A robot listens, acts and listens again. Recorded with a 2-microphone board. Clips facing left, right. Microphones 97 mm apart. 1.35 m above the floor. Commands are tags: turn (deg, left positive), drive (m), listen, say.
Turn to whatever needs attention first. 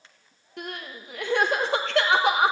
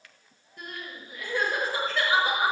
<turn deg="90"/>
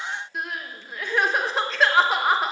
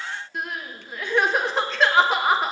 <say>Facing the crying.</say>